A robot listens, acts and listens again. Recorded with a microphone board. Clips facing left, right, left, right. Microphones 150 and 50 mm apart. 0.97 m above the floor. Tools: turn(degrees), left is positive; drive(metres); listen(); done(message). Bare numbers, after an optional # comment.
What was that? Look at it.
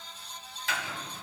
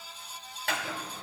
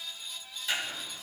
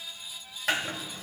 # The chopping: about 65° right or 115° right.
turn(-65)
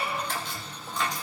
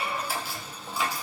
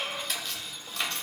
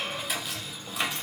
# So it is at 10° right.
turn(-10)
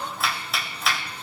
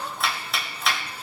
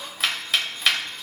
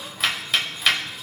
done("Facing the chopping.")